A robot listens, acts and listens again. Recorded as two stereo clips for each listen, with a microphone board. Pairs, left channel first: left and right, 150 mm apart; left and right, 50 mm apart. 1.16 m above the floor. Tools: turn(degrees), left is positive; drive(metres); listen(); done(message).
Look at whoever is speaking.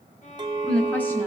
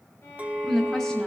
turn(degrees=30)
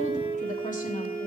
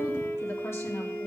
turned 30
listen()
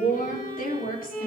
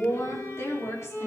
turn(degrees=110)
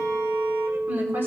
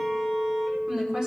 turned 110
turn(degrees=-15)
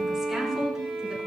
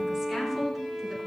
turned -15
done("Facing the woman speaking, 2 to 4 m away.")